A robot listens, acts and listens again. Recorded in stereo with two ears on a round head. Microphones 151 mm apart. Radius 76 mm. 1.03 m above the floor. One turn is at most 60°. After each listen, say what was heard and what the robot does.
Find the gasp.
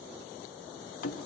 Keep listening.
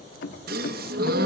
The gasp: about 60° right or 120° right. Turn 60° right.
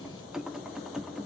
Keep listening.
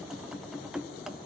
I heard a gasp, but can't make it out now. It was about straight ahead or 60° right.